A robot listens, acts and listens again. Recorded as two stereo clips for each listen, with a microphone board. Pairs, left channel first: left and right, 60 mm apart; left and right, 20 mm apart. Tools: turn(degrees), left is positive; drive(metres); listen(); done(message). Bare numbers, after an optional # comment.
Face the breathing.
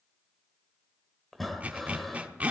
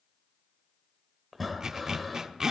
turn(30)
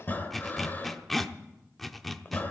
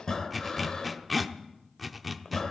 # So it is at 145° left.
turn(145)
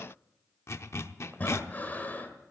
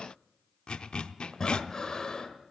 # The breathing is now 30° left.
turn(30)
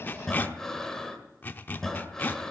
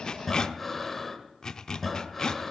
# The breathing is now 10° left.
turn(10)
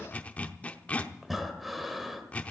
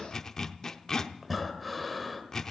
done("Facing the breathing.")